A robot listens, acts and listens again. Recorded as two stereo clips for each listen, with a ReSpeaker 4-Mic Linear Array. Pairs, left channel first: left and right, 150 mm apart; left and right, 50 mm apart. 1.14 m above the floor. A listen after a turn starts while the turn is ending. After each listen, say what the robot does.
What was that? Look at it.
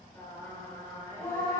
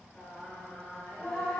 Turn 20° left.
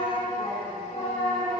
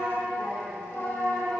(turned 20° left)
Turn 135° left.
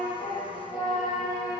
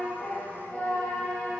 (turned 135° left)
Turn 35° left.
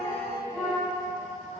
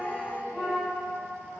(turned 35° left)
Turn 10° right.
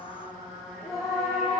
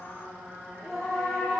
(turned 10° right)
Facing the singing, over 4 m away.